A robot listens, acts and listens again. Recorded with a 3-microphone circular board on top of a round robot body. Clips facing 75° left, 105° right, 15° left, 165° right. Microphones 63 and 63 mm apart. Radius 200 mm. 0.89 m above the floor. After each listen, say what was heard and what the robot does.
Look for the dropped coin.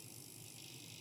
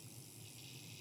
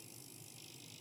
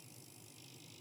Keep listening.
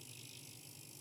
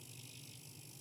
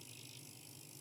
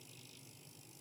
Keep listening.
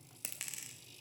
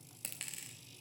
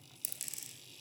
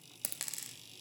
The dropped coin: 160° left. Turn 160° left.
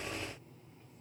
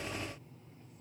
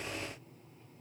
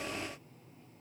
I heard a dropped coin from this way, but can't make it out now.